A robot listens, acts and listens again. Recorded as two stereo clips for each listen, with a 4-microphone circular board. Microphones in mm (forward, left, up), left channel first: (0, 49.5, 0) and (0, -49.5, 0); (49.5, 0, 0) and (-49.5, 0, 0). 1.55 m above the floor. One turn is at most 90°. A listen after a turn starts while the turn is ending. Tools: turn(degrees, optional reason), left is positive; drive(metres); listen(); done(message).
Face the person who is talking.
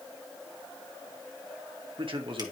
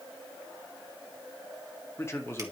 turn(degrees=-60, reason="The man speaking: 60° right.")
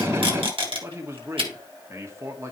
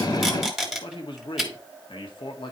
turn(degrees=-30, reason="The man speaking is now 30° right.")
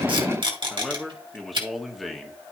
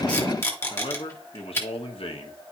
done("Found it: a man speaking, straight ahead.")